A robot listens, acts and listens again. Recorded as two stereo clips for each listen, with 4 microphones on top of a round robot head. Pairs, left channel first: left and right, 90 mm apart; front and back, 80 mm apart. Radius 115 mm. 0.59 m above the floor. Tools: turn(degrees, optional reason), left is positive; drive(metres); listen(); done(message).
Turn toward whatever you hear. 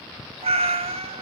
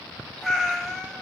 turn(degrees=-85, reason="The cat meowing: 85° right.")
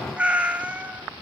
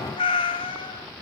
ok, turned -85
turn(degrees=-15, reason="The cat meowing is now 15° right.")
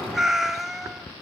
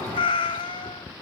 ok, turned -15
done("Facing the cat meowing.")